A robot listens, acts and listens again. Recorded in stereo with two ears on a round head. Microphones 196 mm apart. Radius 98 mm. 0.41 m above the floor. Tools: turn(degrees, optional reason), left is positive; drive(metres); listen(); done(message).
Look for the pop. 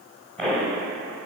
turn(degrees=30)
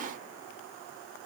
listen()
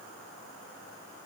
done("I heard a pop, but can't make it out now. It was about 25° right or 145° left.")